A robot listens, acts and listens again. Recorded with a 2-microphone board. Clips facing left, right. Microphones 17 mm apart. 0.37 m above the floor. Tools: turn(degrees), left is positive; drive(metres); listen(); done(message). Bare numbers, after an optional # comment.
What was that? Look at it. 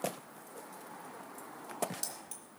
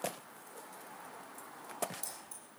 turn(90)
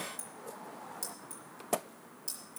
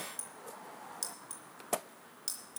# So it is at 45° right.
turn(-45)
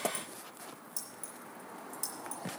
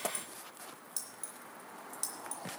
# The keys jangling is now 25° right.
turn(-25)
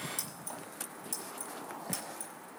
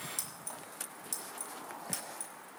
listen()
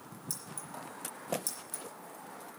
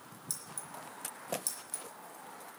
# The keys jangling is now 10° right.
turn(-10)
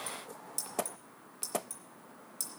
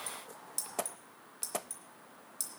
done("Found it: keys jangling, straight ahead.")